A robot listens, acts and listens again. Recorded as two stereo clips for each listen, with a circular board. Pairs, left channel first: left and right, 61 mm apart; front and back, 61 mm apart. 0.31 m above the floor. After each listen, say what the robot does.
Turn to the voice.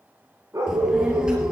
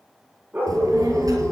Turn 165° right.
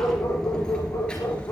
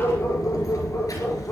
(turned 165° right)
Turn 20° left.
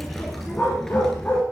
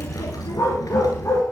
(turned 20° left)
Turn 10° left.
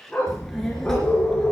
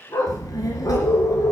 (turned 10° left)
Turn 10° left.
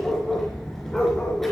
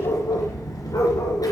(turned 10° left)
Facing the child speaking, 2 to 4 m away.